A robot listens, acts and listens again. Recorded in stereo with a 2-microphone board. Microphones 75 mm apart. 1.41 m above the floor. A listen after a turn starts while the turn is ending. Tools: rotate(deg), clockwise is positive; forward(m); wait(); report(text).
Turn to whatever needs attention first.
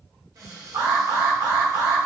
rotate(60)
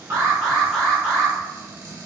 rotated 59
report("Found it: an alarm, straight ahead.")